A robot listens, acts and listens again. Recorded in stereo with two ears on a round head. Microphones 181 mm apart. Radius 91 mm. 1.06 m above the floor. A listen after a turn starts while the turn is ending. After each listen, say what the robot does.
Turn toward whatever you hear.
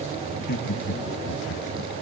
Turn 60° left.
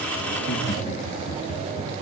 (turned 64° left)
Turn 40° left.
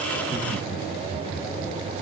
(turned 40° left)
Found it: laughter, straight ahead.